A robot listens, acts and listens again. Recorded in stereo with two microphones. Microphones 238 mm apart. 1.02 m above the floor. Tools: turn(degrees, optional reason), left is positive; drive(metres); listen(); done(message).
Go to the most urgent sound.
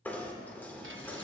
listen()
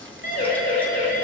turn(degrees=45, reason="The siren: about 45° left or 135° left.")
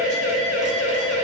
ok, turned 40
turn(degrees=95, reason="So it is at 95° left.")
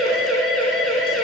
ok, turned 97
drive(metres=1.0)
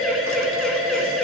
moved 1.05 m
drive(metres=1.0)
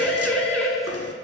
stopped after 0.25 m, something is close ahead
done("Blocked. The siren is further on, straight ahead.")